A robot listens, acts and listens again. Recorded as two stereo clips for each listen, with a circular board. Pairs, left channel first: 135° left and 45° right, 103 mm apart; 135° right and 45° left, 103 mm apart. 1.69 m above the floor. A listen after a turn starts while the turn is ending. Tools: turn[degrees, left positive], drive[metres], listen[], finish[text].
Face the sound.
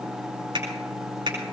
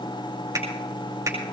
Thought: The finger snap: 15° right.
Action: turn[-15]
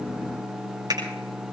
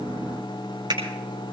Action: finish[Found it: a finger snap, straight ahead.]